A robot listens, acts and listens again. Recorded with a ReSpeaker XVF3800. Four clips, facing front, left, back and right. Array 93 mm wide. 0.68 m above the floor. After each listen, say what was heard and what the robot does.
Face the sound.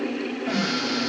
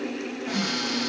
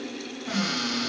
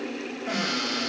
The cupboard door: 45° right. Turn 45° right.
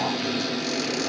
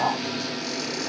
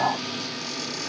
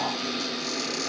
Found it: a cupboard door, straight ahead.